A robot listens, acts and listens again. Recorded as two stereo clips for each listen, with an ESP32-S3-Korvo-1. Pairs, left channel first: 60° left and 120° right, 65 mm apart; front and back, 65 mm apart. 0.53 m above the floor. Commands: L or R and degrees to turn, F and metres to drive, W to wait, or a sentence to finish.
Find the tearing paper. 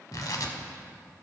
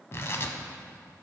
L45
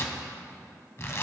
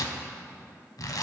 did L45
L15
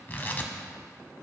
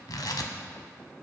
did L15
Facing the tearing paper.